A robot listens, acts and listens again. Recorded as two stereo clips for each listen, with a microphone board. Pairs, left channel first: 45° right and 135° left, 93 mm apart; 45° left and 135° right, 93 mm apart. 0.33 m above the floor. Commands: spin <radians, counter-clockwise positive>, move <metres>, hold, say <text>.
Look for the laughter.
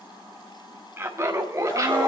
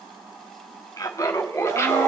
spin 1.75
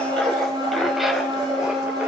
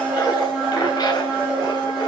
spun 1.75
hold
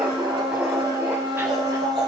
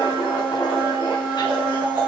hold
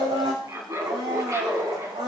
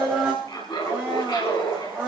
spin 1.48
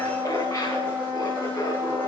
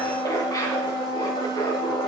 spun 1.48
hold
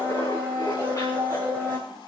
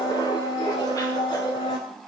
hold
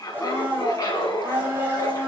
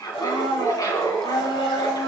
say Facing the laughter, 2 to 4 m away.